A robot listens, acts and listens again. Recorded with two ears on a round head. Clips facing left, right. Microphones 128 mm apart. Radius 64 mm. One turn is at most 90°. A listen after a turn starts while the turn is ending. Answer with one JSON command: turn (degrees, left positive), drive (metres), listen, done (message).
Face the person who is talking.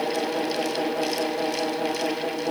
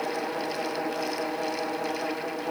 {"listen": true}
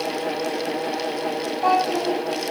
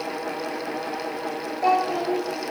{"turn": -50}
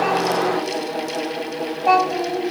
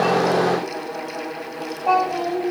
{"done": "Facing the child speaking, over 4 m away."}